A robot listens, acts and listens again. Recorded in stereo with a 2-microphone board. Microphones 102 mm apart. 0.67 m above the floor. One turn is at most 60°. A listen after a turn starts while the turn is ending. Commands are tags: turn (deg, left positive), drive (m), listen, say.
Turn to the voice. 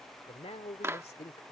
<turn deg="60"/>
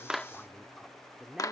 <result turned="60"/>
<say>Facing the man speaking.</say>